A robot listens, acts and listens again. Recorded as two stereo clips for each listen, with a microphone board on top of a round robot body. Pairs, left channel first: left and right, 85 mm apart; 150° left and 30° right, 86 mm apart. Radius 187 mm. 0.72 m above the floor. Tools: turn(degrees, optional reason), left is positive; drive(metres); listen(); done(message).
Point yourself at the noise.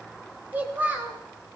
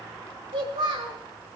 turn(degrees=-20, reason="The child speaking: 20° right.")
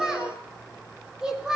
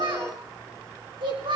turn(degrees=-10, reason="The child speaking is now 10° right.")
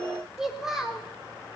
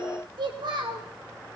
done("Found it: a child speaking, straight ahead.")